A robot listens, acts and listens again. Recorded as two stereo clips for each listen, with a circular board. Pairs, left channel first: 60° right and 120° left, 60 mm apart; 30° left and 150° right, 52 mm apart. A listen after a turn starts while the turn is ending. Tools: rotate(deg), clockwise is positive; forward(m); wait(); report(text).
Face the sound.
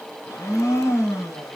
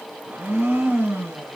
rotate(100)
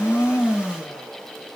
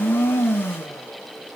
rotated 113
rotate(-15)
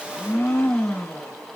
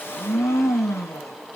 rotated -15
report("Facing the blender.")